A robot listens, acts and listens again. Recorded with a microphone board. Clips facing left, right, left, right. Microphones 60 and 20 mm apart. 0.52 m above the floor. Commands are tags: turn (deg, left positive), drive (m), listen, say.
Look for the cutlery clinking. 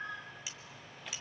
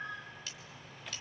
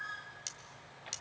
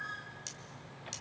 <turn deg="30"/>
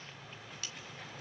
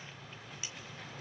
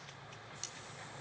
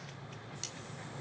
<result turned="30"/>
<listen/>
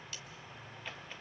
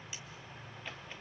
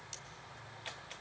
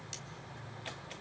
<listen/>
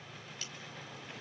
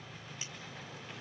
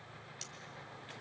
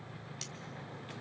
<say>I heard cutlery clinking, but can't make it out now. It was about 20° right or 140° left.</say>